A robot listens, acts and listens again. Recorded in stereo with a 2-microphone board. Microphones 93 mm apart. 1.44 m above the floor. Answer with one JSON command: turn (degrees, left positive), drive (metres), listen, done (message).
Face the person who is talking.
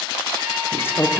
{"turn": 25}
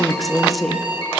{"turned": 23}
{"done": "Facing the woman speaking, under 1 m away."}